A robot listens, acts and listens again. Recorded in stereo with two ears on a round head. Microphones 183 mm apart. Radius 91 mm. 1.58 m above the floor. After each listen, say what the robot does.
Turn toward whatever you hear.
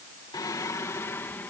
Turn 30° left.
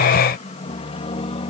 Turn 150° left.
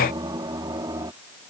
Turn 20° right.
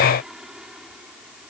Facing the singing.